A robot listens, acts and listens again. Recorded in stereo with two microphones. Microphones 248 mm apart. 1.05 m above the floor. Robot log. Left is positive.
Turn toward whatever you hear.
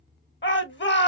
note: The shout: about 50° left or 130° left.
cmd yaw +50
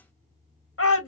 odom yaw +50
note: So it is at 75° left.
cmd yaw +75
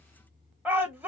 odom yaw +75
end: Found it: a shout, straight ahead, 1 to 2 m away.